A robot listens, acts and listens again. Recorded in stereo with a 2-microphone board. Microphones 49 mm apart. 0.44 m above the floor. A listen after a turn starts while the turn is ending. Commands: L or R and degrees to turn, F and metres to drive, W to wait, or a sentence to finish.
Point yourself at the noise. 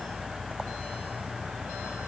W
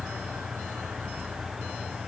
W
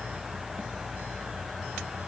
I can't make out anything.